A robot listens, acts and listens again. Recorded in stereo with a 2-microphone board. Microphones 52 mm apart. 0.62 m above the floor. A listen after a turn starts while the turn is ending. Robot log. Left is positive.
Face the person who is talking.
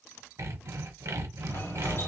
cmd idle
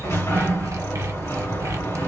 cmd idle
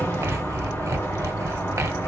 end: I can't make out anyone speaking to turn to.